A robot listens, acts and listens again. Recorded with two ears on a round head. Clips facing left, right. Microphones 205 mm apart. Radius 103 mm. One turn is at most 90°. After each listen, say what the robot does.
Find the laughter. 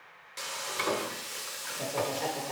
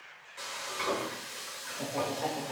Turn 45° left.
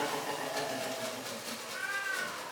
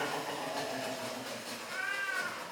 Turn 40° left.
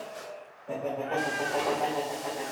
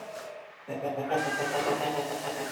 Turn 30° right.
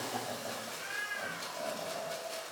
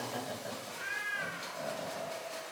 Found it: laughter, straight ahead.